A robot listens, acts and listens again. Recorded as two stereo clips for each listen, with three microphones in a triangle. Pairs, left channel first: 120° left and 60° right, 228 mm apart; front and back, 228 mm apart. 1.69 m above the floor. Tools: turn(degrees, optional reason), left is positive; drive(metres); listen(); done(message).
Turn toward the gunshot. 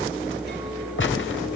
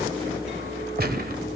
turn(degrees=140, reason="The gunshot: 140° left.")
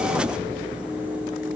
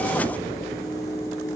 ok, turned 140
done("Facing where the gunshot came from. I can't hear it now.")